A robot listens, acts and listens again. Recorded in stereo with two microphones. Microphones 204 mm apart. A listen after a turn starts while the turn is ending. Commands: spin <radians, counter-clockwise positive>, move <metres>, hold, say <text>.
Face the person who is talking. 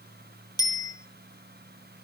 hold
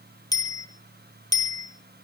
hold
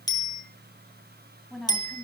spin 0.52
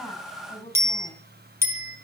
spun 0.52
spin 2.62
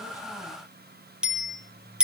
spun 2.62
hold
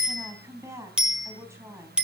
spin -0.26
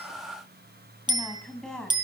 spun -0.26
say Facing the woman speaking, 2 to 4 m away.